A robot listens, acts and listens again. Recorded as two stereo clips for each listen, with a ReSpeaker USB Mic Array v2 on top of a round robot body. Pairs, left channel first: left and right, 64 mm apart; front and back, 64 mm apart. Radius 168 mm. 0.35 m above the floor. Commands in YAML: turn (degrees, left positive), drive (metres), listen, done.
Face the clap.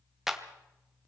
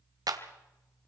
turn: -175
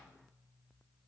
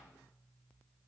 listen: true
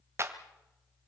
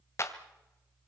turn: -45
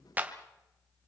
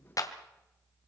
turn: -25
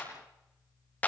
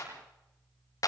turn: 25
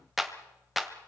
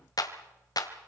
done: "Facing the clap, 2 to 4 m away."